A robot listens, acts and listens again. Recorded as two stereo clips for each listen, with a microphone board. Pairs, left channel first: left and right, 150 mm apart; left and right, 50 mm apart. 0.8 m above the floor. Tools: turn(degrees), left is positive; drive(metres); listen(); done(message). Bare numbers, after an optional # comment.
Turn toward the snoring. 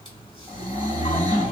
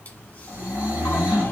# The snoring: about 25° right or 155° right.
turn(-25)
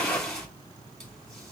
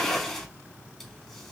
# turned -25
listen()
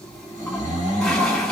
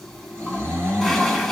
# So it is at 125° right.
turn(-125)
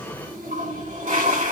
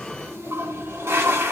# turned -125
listen()
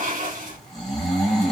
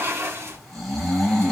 done("Facing the snoring, 2 to 4 m away.")